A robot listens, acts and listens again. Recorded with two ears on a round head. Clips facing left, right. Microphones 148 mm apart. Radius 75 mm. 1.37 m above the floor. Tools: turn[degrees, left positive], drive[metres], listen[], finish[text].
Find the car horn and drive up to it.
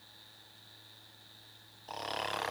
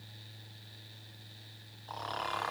Action: listen[]
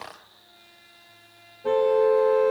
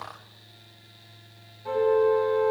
Action: turn[90]
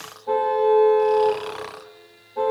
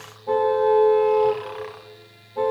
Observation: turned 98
Thought: So it is at 10° right.
Action: turn[-10]
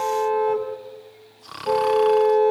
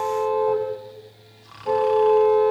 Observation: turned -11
Action: drive[1.0]
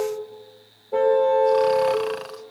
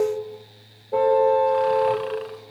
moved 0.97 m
Action: drive[1.0]
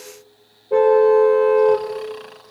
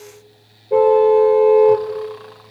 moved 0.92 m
Action: drive[1.0]
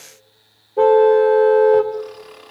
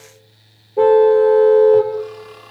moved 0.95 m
Action: drive[1.0]
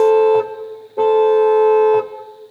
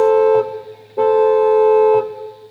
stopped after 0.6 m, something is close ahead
Action: finish[I am next to the car horn.]